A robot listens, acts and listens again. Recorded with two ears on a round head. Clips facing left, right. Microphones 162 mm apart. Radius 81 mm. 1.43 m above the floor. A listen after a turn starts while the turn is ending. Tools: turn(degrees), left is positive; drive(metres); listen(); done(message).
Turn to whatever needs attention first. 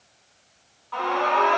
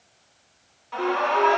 turn(degrees=-25)
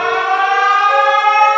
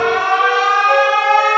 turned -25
turn(degrees=-135)
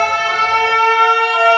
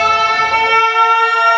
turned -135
done("Facing the alarm, 1 to 2 m away.")